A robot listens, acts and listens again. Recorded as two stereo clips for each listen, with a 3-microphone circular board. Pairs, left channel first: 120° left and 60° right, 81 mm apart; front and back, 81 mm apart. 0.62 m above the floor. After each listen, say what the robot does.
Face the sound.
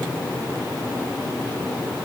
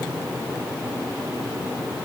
Keep listening.
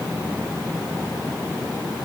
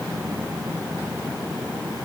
Keep listening.
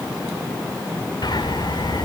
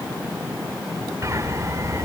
Turn 135° left.
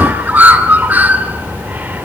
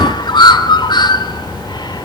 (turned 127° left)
Facing the bird.